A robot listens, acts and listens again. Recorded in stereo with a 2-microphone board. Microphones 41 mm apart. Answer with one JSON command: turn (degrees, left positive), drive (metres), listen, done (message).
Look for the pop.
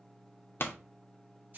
{"turn": 65}
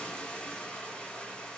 {"listen": true}
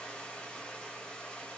{"done": "I heard a pop, but can't make it out now. It was about straight ahead or 50° left."}